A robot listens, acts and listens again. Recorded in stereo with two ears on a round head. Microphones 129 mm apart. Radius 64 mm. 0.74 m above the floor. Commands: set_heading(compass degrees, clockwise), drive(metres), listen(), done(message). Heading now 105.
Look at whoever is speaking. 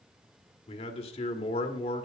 set_heading(65)
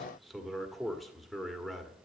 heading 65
done("Found it: a man speaking, straight ahead, 1 to 2 m away.")